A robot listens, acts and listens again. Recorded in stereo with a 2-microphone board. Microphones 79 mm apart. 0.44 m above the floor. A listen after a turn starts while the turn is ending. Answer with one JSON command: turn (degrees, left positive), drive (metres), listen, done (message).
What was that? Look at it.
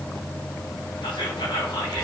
{"turn": 90}
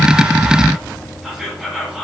{"done": "Found it: whispering, straight ahead."}